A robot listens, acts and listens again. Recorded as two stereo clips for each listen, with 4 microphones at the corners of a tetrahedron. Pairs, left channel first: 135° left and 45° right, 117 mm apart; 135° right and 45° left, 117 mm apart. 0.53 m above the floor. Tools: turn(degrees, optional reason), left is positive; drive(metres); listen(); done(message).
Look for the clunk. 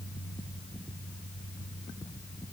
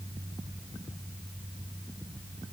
listen()
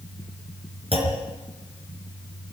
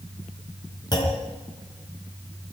turn(degrees=-80, reason="The clunk: 80° right.")
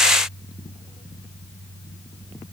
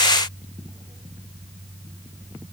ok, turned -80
done("Facing where the clunk came from. I can't hear it now.")